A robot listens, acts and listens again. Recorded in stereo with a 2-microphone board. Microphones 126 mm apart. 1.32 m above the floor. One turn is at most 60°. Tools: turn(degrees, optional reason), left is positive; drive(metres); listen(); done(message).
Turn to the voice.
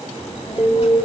turn(degrees=55, reason="The child speaking: about 55° left or 125° left.")
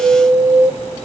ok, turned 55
turn(degrees=60, reason="So it is at 60° left.")
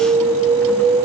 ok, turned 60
listen()
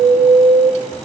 turn(degrees=10, reason="The child speaking is now 10° left.")
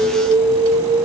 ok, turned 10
listen()
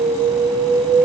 listen()
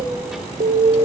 done("Facing the child speaking.")